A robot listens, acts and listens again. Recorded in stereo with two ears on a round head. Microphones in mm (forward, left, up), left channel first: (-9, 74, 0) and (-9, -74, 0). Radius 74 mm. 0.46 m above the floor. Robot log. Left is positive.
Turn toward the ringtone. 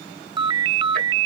note: The ringtone: about 25° right or 155° right.
cmd yaw -25
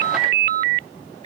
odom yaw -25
note: So it is at 125° right.
cmd yaw -125
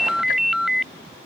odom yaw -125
end: Facing the ringtone.